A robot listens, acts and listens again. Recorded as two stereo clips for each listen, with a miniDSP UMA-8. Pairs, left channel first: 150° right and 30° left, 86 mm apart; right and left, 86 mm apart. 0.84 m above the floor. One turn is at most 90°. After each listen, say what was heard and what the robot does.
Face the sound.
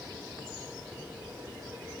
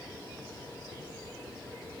Keep listening.
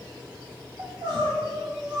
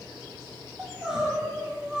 The crying: 10° left. Turn 10° left.
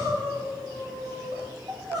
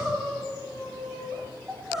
Found it: crying, straight ahead, 2 to 4 m away.